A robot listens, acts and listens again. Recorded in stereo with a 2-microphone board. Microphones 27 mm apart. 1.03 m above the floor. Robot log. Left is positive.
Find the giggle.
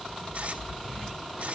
cmd idle
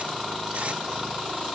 cmd idle
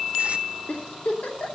note: The giggle: about 70° left or 110° left.
cmd yaw +70
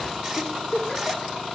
note: So it is at 35° left.
cmd yaw +35
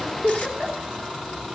note: The giggle is now 10° right.
cmd yaw -10
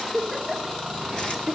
end: Facing the giggle.